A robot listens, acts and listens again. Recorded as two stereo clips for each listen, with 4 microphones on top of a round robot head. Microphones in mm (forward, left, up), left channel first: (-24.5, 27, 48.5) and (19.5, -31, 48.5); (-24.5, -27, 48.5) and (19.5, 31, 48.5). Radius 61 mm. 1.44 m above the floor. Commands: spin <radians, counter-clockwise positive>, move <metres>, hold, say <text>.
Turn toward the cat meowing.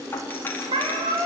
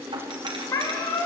spin -1.22
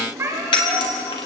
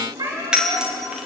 spin 0.17
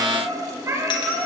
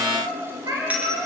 say Facing the cat meowing.